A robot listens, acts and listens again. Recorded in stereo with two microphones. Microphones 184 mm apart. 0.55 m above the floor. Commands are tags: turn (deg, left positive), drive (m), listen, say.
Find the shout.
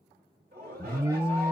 <turn deg="-55"/>
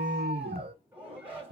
<turn deg="-10"/>
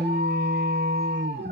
<listen/>
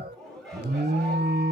<say>Facing the shout.</say>